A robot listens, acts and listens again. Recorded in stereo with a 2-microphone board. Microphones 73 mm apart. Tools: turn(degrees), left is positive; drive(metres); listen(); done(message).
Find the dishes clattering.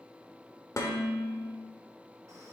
turn(degrees=45)
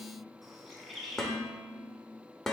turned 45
done("Found it: dishes clattering, straight ahead, 1 to 2 m away.")